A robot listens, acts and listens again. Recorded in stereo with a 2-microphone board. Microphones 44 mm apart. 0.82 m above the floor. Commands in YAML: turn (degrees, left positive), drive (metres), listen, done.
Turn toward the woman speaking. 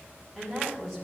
turn: 30
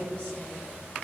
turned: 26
turn: 150
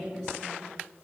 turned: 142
done: "Facing the woman speaking, 2 to 4 m away."